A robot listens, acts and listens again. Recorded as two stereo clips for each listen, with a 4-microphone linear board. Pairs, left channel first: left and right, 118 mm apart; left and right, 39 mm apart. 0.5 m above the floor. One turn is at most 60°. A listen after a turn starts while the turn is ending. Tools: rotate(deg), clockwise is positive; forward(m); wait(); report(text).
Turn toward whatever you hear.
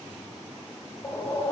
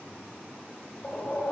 rotate(-30)
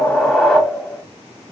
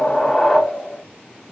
report("Found it: a whoosh, straight ahead, 1 to 2 m away.")